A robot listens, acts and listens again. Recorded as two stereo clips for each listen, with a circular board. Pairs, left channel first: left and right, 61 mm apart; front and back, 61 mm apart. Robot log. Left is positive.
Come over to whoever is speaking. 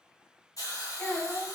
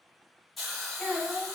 note: The child speaking: 40° left.
cmd yaw +40
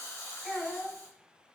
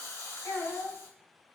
cmd fwd 1.0
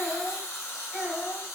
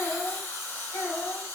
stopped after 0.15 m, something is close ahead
end: Blocked. The child speaking is further on, straight ahead.